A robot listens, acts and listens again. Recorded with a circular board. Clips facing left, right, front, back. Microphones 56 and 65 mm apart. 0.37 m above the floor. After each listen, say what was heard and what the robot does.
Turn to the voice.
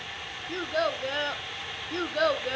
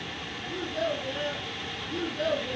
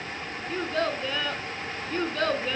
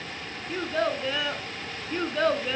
The child speaking: 100° left. Turn 100° left.
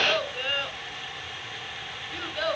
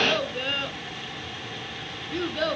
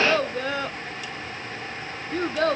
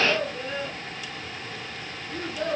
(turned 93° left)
Found it: a child speaking, straight ahead, 1 to 2 m away.